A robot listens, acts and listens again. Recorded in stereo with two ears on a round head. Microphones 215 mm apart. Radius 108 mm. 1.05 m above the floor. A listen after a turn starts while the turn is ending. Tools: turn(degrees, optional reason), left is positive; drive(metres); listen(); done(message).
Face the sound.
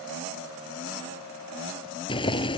turn(degrees=20, reason="The boiling: about 20° left or 160° left.")
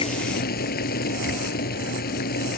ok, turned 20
turn(degrees=140, reason="So it is at 140° left.")
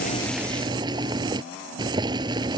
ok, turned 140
turn(degrees=-20, reason="The boiling is now 20° right.")
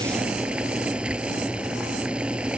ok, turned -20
done("Found it: boiling, straight ahead.")